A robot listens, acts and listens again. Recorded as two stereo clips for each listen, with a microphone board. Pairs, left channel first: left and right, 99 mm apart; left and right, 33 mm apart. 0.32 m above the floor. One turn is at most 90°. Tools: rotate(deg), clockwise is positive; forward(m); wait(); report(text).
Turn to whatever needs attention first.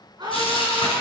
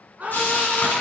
rotate(45)
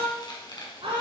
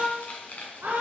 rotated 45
rotate(85)
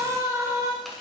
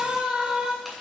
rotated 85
rotate(35)
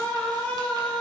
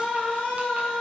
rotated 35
rotate(-15)
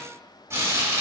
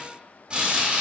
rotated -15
wait()
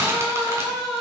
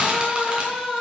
report("Found it: a scream, straight ahead, 2 to 4 m away.")